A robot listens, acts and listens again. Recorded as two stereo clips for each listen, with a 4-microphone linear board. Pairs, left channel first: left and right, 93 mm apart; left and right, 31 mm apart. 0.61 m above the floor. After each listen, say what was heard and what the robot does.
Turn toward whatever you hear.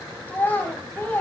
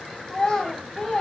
The child speaking: about 20° left or 160° left. Turn 20° left.
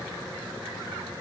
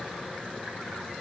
Keep listening.
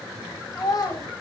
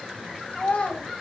So it is at 140° left. Turn 140° left.
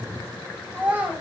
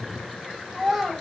The child speaking is now 15° right. Turn 15° right.
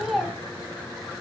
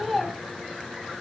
Found it: a child speaking, straight ahead.